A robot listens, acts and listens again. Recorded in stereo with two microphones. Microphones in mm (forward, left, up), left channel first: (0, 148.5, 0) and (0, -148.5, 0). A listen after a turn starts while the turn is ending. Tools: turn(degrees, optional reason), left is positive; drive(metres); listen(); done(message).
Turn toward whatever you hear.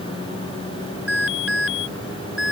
turn(degrees=-50, reason="The alarm: about 50° right or 130° right.")
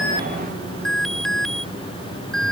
done("Facing the alarm.")